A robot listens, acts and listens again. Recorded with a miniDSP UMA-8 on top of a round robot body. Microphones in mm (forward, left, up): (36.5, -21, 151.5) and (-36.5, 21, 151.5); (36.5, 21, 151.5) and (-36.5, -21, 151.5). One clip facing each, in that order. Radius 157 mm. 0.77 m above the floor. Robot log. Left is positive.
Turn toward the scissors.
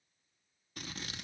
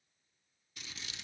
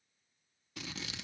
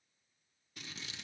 note: The scissors: 20° left.
cmd yaw +20
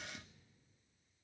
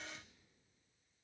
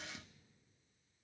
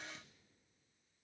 end: Found it: scissors, straight ahead, under 1 m away.